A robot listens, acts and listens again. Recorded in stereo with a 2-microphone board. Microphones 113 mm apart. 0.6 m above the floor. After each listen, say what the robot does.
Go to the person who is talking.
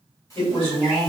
Turn 65° left.
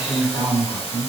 Turn 30° left.
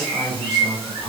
Drive 1.0 m forward.
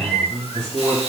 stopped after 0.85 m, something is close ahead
I am next to the man speaking.